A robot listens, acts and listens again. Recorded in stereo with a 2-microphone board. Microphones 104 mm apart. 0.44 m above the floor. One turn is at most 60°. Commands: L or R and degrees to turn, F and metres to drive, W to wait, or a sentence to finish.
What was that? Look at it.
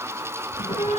L60
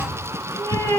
L35
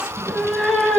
Found it: a cat meowing, straight ahead.